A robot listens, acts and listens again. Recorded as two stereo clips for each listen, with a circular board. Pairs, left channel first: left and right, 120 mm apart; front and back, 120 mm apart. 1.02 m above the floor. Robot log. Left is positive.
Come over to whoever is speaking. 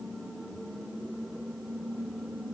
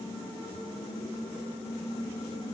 cmd idle
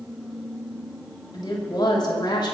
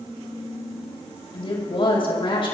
note: The woman speaking: 40° left.
cmd yaw +40
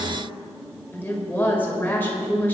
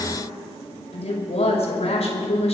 note: The woman speaking is now 15° left.
cmd yaw +15
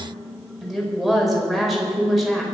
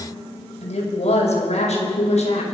cmd fwd 1.0
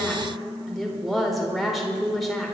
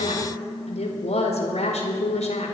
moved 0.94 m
cmd fwd 1.0
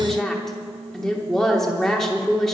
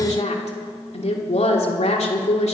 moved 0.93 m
cmd fwd 1.0
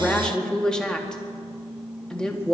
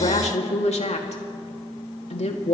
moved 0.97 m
cmd fwd 1.0
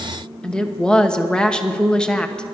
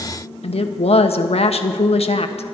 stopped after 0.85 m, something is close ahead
note: The woman speaking is now 10° left.
cmd yaw +10
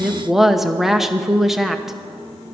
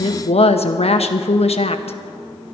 end: Arrived at the woman speaking, straight ahead.